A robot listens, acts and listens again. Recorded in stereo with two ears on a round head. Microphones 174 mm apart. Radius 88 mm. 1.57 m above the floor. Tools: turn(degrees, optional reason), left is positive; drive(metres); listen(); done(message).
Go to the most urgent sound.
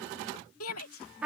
turn(degrees=90)
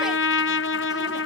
listen()
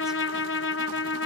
listen()
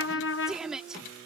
drive(metres=1.0)
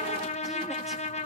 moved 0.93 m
listen()
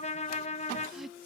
listen()
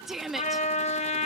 drive(metres=1.0)
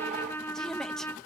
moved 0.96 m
listen()
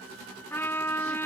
listen()
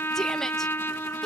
done("I heard a shout from this way, but can't make it out now. I did not reach it.")